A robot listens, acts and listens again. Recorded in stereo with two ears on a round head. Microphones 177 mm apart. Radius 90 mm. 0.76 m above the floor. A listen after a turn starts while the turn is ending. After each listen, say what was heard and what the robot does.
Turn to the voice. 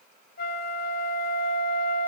Keep listening.
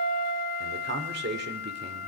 The man speaking: about 55° right or 125° right. Turn 55° right.
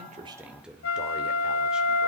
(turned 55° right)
Facing the man speaking, 2 to 4 m away.